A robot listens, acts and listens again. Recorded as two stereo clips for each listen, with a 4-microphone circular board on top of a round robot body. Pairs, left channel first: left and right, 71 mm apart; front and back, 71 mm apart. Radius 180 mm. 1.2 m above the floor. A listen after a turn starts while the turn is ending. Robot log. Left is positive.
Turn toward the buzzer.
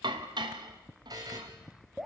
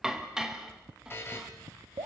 note: The buzzer: 60° right.
cmd yaw -60
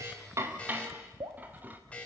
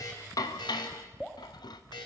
note: The buzzer is now 15° left.
cmd yaw +15
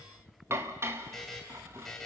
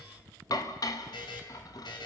end: Found it: a buzzer, straight ahead.